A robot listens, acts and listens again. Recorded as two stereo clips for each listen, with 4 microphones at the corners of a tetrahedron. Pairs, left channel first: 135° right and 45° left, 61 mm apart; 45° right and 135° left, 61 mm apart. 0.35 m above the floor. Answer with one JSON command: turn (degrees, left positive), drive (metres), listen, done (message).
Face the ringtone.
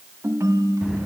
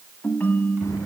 {"turn": 10}
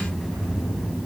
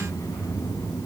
{"listen": true}
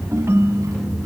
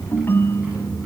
{"done": "Facing the ringtone, 1 to 2 m away."}